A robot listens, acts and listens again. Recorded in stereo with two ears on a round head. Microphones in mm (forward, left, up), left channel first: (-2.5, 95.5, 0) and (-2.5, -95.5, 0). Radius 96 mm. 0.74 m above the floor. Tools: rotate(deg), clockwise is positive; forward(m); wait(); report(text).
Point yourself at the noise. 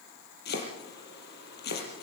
rotate(-50)
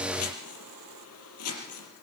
rotate(-80)
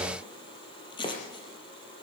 rotate(-25)
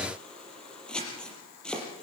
report("Facing the chopping, over 4 m away.")